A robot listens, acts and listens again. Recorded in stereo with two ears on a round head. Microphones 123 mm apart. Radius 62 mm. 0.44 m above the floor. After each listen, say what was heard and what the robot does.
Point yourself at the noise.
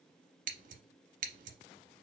The scissors: about 60° right or 120° right. Turn 60° right.
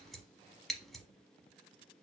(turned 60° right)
Facing the scissors, under 1 m away.